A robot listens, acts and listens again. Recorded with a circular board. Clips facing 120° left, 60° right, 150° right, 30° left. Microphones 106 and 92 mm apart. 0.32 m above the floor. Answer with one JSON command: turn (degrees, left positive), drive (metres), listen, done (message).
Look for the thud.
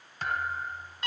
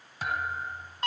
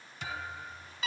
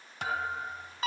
{"turn": 25}
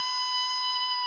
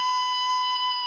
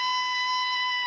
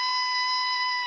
{"done": "I heard a thud from this way, but can't make it out now."}